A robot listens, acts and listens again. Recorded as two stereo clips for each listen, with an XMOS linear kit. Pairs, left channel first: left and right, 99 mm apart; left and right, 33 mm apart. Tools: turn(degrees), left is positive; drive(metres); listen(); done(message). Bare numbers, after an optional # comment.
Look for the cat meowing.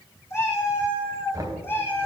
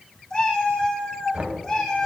# The cat meowing: about 20° left or 160° left.
turn(20)
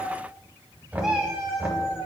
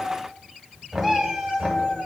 # So it is at 10° right.
turn(-10)
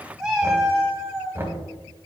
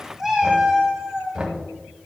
# The cat meowing is now 15° right.
turn(-15)
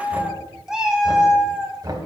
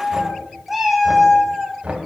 done("Facing the cat meowing.")